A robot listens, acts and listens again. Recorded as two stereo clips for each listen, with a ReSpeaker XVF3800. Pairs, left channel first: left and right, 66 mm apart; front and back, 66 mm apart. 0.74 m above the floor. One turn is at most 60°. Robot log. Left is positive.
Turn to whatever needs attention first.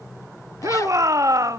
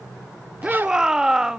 note: The shout: 100° right.
cmd yaw -60
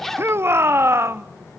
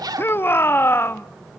note: The shout is now 50° right.
cmd yaw -50
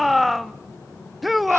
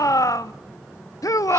end: Facing the shout, under 1 m away.